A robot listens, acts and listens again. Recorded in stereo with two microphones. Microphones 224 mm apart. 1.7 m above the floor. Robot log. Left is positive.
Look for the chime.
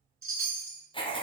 note: The chime: about 65° right or 115° right.
cmd yaw -65
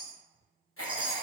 note: So it is at 25° right.
cmd yaw -25
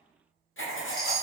end: Facing the chime, 1 to 2 m away.